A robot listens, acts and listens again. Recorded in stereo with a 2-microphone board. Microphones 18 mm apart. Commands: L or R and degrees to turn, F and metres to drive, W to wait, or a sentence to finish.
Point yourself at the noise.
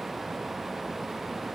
W
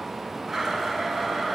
R30
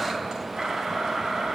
R135
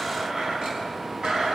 R60
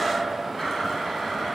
Facing the blender.